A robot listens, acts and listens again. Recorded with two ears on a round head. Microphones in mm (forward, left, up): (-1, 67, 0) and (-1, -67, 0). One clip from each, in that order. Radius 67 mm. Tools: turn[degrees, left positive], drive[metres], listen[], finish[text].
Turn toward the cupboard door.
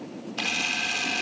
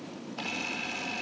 Action: listen[]
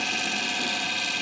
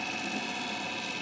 Action: listen[]
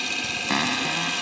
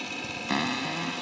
Thought: The cupboard door: about 25° left or 155° left.
Action: turn[25]
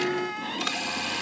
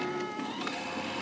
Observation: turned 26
Thought: So it is at 130° left.
Action: turn[130]
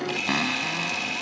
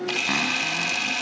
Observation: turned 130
Action: listen[]
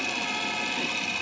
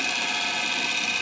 Action: listen[]
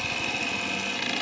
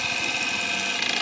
Action: finish[I heard a cupboard door from this way, but can't make it out now.]